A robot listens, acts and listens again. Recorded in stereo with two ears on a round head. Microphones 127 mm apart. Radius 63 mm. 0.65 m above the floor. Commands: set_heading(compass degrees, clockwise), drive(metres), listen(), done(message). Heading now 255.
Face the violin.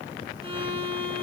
set_heading(295)
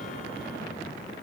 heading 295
listen()
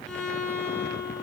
done("Found it: a violin, straight ahead, over 4 m away.")